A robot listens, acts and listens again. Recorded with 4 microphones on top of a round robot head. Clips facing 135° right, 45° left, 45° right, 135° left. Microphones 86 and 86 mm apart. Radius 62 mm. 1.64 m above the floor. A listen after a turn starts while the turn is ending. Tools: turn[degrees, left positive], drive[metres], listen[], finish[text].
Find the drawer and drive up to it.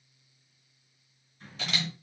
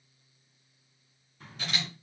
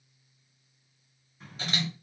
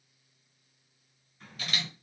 Thought: The drawer: 35° left.
Action: turn[35]
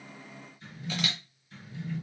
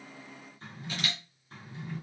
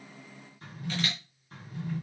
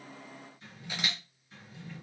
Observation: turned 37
Action: drive[1.0]
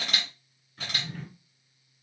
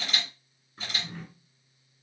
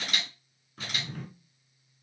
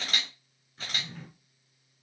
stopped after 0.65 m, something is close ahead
Thought: The drawer is now 20° right.
Action: turn[-20]
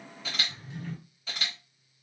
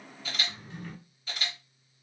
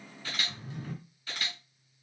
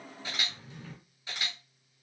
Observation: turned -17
Action: finish[Arrived at the drawer, straight ahead.]